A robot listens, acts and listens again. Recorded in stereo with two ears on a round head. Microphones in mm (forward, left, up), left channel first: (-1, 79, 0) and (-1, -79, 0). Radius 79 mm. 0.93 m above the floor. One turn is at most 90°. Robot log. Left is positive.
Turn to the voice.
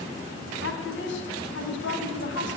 note: The woman speaking: about 75° left or 105° left.
cmd yaw +75
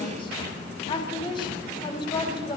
note: So it is at 25° left.
cmd yaw +25
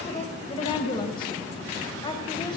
note: The woman speaking is now 25° left.
cmd yaw +25
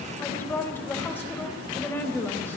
note: The woman speaking is now 10° left.
cmd yaw +10
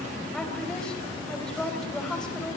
end: Found it: a woman speaking, straight ahead, 2 to 4 m away.